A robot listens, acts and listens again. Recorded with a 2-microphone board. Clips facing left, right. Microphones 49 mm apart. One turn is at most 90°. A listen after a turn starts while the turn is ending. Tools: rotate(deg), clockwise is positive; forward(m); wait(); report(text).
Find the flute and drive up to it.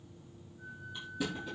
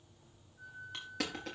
rotate(55)
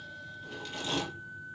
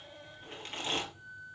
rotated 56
rotate(70)
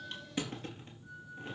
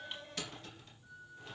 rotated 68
forward(1.0)
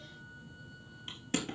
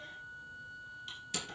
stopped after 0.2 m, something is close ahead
report("Blocked. The flute is further on, straight ahead.")